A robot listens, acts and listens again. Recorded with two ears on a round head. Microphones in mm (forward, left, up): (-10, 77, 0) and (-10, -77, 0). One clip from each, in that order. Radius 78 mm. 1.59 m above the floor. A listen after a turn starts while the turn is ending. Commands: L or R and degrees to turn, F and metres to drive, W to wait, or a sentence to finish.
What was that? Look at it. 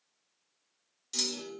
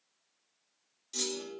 L35
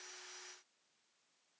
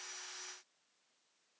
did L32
W
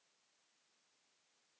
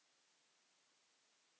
I heard a clunk, but can't make it out now. It was about straight ahead or 115° left.